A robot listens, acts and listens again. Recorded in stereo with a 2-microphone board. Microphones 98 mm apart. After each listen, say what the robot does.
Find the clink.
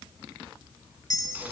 Turn 40° left.
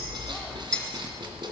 Turn 10° left.
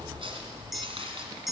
Facing the clink, 1 to 2 m away.